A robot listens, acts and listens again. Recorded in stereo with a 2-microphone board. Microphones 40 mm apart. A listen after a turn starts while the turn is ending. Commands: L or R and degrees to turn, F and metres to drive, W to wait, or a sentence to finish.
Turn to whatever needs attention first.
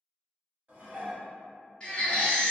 L30
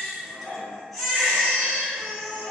Found it: a baby crying, straight ahead, 1 to 2 m away.